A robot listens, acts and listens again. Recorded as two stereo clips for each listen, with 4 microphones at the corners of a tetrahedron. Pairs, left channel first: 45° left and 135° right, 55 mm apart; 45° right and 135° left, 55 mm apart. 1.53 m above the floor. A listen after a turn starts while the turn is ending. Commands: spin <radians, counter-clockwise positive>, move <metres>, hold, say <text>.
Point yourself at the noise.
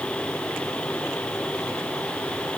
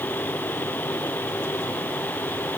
hold
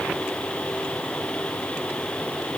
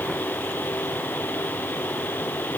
hold
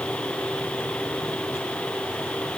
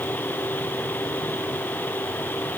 say I can't make out anything to turn to.